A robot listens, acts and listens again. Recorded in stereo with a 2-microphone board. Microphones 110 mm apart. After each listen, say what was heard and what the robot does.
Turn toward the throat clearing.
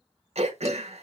Turn 90° right.
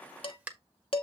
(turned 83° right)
So it is at 15° right. Turn 15° right.
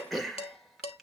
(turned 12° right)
Facing the throat clearing, 1 to 2 m away.